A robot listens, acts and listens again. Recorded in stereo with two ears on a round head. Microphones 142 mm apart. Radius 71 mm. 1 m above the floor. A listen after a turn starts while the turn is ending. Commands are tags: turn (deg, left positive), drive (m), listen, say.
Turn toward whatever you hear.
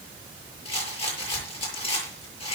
<turn deg="40"/>
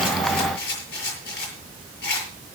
<turn deg="100"/>
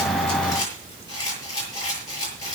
<turn deg="25"/>
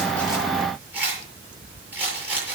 <turn deg="-10"/>
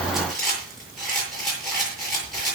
<say>Found it: a rattle, straight ahead, over 4 m away.</say>